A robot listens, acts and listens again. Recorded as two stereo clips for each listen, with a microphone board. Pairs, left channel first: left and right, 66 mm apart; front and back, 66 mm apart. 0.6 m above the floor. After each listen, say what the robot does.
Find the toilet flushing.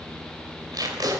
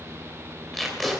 Keep listening.
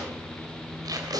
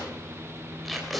Keep listening.
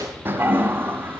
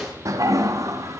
Turn 145° right.
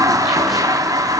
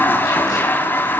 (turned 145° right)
Turn 60° right.
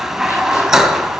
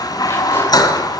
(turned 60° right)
Found it: a toilet flushing, straight ahead, 1 to 2 m away.